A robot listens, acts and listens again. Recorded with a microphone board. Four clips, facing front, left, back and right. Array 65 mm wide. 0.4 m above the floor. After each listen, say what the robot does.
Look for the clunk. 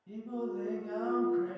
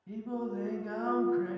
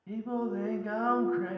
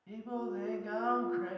Turn 70° left.
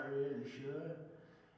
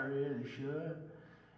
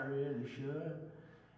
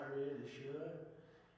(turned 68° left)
Facing where the clunk came from. I can't hear it now.